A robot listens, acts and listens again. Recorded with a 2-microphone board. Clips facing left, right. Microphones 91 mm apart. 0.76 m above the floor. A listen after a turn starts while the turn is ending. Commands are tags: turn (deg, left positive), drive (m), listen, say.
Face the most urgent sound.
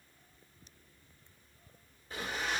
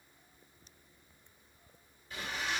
<listen/>
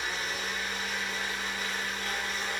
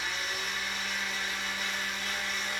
<listen/>
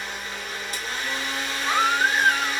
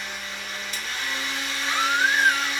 <turn deg="50"/>
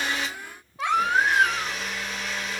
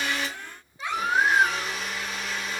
<turn deg="80"/>
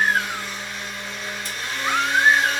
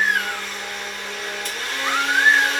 <say>Found it: a baby crying, straight ahead, 1 to 2 m away.</say>